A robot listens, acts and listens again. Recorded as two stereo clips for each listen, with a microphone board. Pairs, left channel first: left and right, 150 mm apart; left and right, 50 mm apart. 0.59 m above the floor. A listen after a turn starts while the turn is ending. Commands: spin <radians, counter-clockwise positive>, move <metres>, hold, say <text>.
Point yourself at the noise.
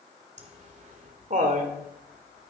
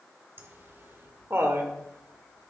spin -0.96
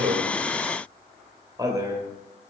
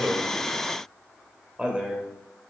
spin -0.35
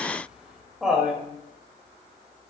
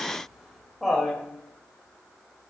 say Found it: laughter, straight ahead, 2 to 4 m away.